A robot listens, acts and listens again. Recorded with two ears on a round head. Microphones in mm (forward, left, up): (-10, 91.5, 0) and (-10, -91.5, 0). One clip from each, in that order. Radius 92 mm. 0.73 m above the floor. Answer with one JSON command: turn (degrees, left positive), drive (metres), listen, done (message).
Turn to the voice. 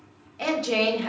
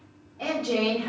{"turn": 60}
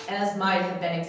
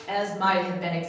{"done": "Facing the woman speaking, 1 to 2 m away."}